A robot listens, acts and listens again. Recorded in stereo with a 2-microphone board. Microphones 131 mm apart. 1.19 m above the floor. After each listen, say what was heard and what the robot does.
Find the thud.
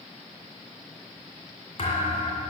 The thud: about 45° left or 135° left. Turn 45° left.
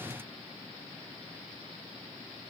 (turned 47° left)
Keep listening.
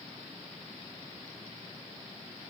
I heard a thud, but can't make it out now. It was about straight ahead or 90° left.